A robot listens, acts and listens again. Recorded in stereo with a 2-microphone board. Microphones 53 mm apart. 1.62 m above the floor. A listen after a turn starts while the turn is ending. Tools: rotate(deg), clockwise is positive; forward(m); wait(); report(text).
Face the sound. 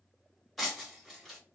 rotate(-30)
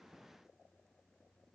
wait()
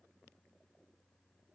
report("I heard breaking glass, but can't make it out now. It was about 25° right or 145° left.")